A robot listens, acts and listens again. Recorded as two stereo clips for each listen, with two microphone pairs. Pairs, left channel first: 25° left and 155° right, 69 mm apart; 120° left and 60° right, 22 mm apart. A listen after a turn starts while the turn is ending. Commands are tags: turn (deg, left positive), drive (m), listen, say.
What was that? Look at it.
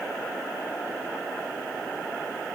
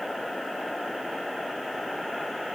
<listen/>
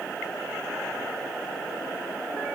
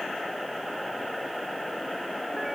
<listen/>
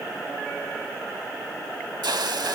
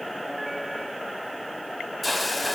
<turn deg="-150"/>
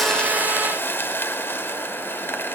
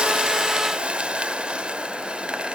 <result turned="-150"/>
<turn deg="-35"/>
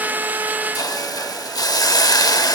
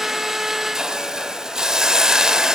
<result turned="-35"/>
<say>Facing the hiss.</say>